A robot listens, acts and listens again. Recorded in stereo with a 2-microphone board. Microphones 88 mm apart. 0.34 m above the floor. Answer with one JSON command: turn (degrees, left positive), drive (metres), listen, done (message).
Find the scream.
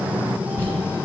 {"listen": true}
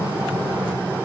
{"listen": true}
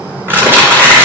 {"done": "I can't make out a scream, only crumpling."}